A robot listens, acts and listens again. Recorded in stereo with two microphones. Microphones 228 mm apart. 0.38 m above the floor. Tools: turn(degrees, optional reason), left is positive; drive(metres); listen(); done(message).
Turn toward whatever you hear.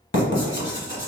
turn(degrees=60, reason="The writing: about 60° left or 120° left.")
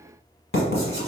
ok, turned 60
turn(degrees=60, reason="So it is at 60° left.")
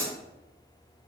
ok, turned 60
turn(degrees=10, reason="The writing is now 10° left.")
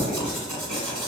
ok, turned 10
done("Found it: writing, straight ahead, 1 to 2 m away.")